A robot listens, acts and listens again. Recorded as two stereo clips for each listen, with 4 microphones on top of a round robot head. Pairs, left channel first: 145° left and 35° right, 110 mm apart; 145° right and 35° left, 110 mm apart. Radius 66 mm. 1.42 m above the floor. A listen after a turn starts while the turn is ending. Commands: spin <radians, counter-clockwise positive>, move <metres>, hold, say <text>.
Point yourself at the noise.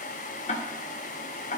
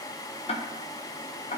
spin 3.05
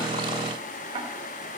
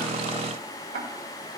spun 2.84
spin 0.26
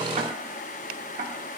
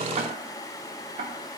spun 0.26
say Facing the ticking, 1 to 2 m away.